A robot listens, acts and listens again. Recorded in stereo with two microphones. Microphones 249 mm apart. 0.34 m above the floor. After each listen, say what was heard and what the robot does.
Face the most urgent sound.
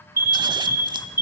The alarm: about 40° left or 140° left. Turn 40° left.
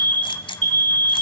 So it is at 95° left. Turn 95° left.
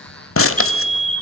Facing the alarm.